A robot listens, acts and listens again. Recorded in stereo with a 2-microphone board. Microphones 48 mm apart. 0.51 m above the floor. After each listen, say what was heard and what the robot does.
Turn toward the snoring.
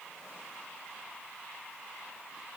Keep listening.
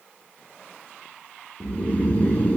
The snoring: about 30° left or 150° left. Turn 30° left.
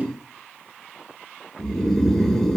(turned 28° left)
Facing the snoring.